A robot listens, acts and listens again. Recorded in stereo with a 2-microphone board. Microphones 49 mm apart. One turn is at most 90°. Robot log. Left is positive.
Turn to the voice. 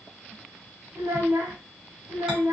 note: The child speaking: about 70° right or 110° right.
cmd yaw -70
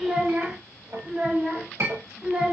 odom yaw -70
note: So it is at 15° right.
cmd yaw -15
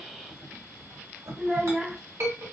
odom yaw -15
end: Found it: a child speaking, straight ahead, 1 to 2 m away.